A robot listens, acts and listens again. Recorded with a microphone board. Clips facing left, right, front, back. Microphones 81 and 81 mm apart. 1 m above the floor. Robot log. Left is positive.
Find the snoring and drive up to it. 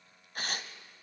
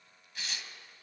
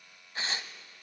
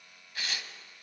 cmd idle
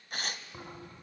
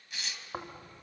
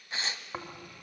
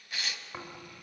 note: The snoring: 65° right.
cmd yaw -65
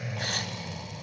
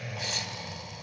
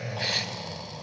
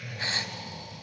cmd fwd 1.0
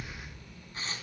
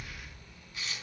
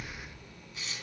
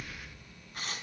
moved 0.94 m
cmd fwd 1.0
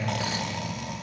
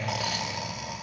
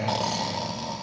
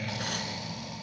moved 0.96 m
cmd fwd 1.0
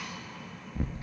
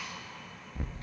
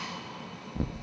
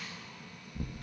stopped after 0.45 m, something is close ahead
end: Arrived at the snoring, straight ahead.